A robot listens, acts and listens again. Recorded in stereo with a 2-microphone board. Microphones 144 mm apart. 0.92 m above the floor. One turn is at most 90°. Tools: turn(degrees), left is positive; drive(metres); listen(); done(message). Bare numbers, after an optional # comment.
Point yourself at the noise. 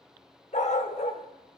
# The dog barking: about 50° left or 130° left.
turn(50)
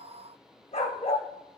# So it is at 60° left.
turn(60)
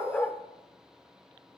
# The dog barking is now 10° left.
turn(10)
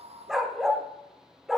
done("Found it: a dog barking, straight ahead, under 1 m away.")